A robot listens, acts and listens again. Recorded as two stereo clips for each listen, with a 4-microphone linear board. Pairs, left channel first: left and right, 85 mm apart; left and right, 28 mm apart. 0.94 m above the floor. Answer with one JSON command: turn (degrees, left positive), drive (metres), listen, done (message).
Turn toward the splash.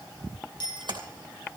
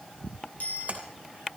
{"turn": -60}
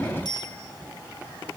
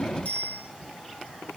{"listen": true}
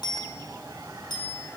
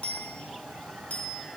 {"done": "I heard a splash, but can't make it out now. It was about straight ahead or 60° right."}